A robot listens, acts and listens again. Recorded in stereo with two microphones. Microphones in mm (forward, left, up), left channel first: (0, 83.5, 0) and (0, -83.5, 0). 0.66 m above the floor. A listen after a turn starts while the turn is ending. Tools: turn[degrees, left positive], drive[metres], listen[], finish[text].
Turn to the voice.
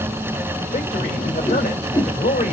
Thought: The man speaking: about 70° left or 110° left.
Action: turn[70]
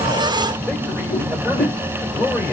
Thought: So it is at 10° left.
Action: turn[10]
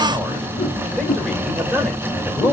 Action: finish[Facing the man speaking.]